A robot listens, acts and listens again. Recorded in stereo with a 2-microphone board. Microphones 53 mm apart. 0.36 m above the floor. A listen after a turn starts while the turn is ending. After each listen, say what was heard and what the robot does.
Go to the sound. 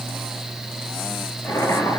The boiling: about 75° left or 105° left. Turn 75° left.
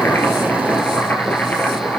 So it is at 30° left. Turn 30° left.
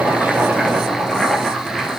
Drive 1.0 m forward.
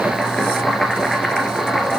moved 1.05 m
Drive 1.0 m forward.
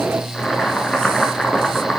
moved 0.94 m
Drive 1.0 m forward.
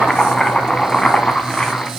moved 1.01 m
The boiling is now 10° left. Turn 10° left.
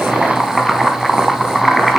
Drive 1.0 m forward.
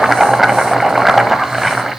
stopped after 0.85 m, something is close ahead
Arrived at the boiling, straight ahead.